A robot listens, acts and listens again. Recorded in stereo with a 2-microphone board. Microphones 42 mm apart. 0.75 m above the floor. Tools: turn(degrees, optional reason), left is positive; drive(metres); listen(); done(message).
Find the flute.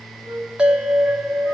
turn(degrees=-90)
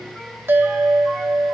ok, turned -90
listen()
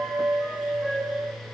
turn(degrees=-10, reason="The flute is now 10° right.")
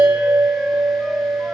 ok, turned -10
listen()
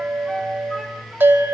listen()
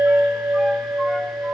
done("Facing where the flute came from. I can't hear it now.")